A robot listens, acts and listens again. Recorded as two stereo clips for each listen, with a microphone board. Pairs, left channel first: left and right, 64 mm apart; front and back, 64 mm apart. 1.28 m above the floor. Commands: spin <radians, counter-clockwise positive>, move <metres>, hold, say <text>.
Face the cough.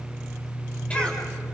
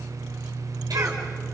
spin 2.79
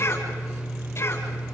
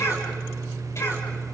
spin 0.79
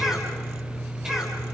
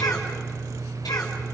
spin -0.17
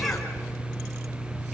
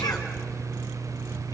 say Found it: a cough, straight ahead.